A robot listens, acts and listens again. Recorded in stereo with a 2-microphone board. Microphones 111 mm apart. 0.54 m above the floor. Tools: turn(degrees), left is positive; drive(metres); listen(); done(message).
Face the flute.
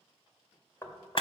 listen()
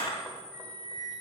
turn(degrees=30)
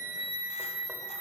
turn(degrees=150)
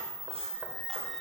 listen()
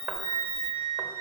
turn(degrees=-10)
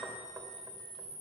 listen()
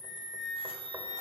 done("Found it: a flute, straight ahead, 2 to 4 m away.")